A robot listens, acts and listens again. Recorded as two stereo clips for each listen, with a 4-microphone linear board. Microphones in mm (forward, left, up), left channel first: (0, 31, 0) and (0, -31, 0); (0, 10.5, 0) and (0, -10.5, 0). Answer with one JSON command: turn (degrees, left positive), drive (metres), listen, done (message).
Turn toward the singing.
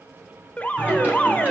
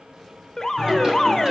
{"turn": -25}
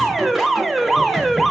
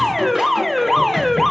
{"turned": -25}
{"listen": true}
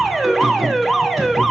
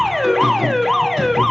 {"done": "Found it: singing, straight ahead."}